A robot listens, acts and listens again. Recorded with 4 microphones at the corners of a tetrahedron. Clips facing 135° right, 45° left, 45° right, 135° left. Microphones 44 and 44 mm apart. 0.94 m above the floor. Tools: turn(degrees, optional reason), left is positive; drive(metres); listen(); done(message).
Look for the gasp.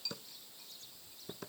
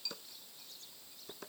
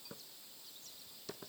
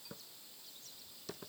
listen()
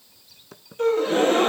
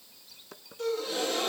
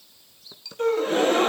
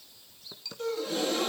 turn(degrees=-90, reason="The gasp: 90° right.")
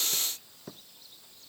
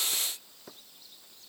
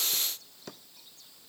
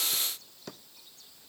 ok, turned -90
done("I heard a gasp from this way, but can't make it out now.")